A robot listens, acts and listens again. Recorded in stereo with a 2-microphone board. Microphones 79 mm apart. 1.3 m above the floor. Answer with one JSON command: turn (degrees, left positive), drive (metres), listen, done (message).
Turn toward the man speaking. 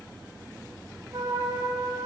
{"listen": true}
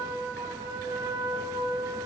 {"listen": true}
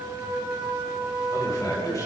{"turn": 45}
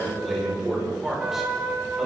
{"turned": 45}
{"done": "Facing the man speaking."}